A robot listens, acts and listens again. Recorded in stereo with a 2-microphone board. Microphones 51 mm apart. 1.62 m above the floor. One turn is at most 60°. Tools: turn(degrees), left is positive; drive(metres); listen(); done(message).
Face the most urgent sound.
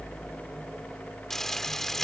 listen()
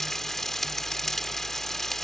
listen()
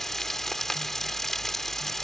done("I can't make out anything urgent to turn to.")